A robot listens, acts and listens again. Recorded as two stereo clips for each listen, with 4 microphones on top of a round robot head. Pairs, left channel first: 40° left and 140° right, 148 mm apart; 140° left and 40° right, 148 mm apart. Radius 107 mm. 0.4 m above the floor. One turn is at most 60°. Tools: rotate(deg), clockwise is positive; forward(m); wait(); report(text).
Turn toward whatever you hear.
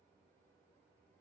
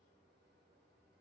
wait()
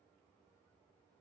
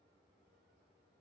wait()
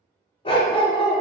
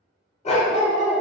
rotate(-60)
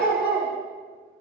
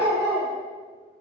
rotate(-60)
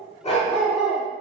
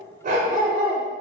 report("Facing the dog barking.")